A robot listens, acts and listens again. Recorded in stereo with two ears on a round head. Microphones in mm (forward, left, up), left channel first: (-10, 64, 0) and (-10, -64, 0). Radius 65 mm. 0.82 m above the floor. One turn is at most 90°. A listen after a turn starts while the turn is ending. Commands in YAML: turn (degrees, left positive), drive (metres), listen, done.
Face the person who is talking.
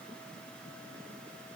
listen: true
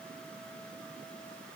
listen: true
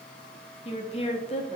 turn: 45
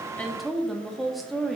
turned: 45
done: "Found it: a woman speaking, straight ahead."